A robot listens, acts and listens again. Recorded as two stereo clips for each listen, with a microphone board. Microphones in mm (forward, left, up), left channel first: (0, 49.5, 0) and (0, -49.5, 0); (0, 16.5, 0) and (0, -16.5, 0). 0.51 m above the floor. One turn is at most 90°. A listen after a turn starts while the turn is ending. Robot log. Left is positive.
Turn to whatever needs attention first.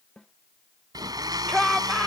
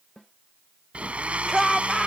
cmd yaw +30
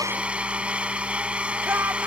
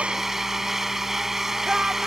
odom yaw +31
note: So it is at 25° right.
cmd yaw -25
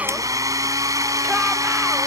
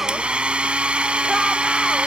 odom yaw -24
cmd idle
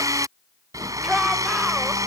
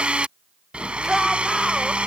end: Facing the shout.